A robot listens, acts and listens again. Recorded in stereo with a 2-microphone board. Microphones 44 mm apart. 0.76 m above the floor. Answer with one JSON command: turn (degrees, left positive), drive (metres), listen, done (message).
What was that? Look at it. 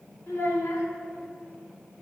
{"turn": 75}
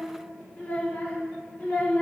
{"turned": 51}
{"turn": 35}
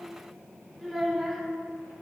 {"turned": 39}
{"done": "Found it: a child speaking, straight ahead."}